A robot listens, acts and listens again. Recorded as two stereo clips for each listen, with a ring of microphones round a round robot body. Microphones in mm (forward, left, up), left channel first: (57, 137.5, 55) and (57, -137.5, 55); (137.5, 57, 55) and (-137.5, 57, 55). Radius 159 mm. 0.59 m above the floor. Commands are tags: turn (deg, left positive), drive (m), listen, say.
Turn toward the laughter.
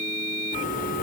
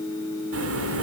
<turn deg="150"/>
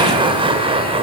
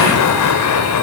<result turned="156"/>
<turn deg="-20"/>
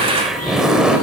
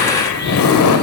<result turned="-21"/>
<say>Found it: laughter, straight ahead.</say>